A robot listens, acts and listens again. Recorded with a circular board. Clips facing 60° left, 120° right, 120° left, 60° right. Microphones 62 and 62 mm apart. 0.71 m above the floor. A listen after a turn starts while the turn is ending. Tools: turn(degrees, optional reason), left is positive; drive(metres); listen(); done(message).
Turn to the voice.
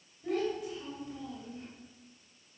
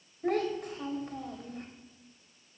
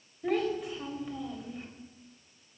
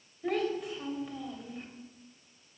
turn(degrees=-150, reason="The child speaking: 150° right.")
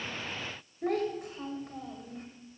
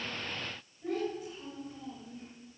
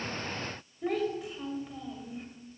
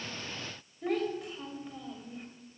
turn(degrees=30, reason="The child speaking is now 30° left.")
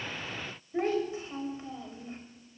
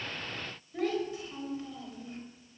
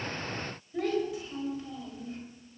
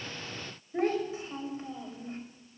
done("Found it: a child speaking, straight ahead.")